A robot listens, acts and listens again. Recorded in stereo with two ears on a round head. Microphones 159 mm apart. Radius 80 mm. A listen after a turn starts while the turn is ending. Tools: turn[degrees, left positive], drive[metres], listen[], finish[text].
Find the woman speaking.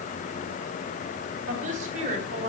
Thought: The woman speaking: about 40° right or 140° right.
Action: turn[-40]
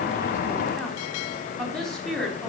Action: finish[Found it: a woman speaking, straight ahead, over 4 m away.]